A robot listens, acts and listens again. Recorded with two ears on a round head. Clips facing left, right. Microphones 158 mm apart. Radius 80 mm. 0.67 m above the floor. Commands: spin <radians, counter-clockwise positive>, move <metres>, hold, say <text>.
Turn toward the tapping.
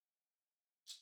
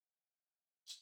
hold
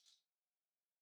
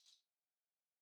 hold
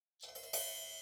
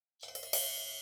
spin -1.57
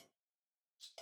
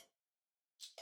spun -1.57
say Facing the tapping.